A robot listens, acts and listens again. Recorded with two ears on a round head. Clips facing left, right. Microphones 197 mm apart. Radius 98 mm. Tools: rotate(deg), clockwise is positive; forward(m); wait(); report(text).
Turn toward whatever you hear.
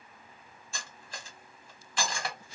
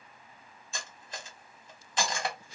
rotate(20)
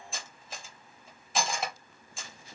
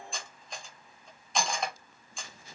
report("Found it: cutlery clinking, straight ahead, under 1 m away.")